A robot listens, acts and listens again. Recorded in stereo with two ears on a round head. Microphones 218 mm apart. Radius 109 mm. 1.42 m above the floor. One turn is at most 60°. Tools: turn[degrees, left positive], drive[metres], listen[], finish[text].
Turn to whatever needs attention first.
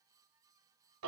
Action: listen[]
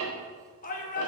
Thought: The shout: about 35° left or 145° left.
Action: turn[35]
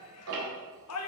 Thought: So it is at 110° left.
Action: turn[60]
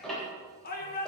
Thought: The shout is now 40° left.
Action: turn[40]
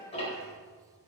Thought: The shout is now 15° left.
Action: turn[15]
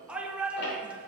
Action: finish[Found it: a shout, straight ahead.]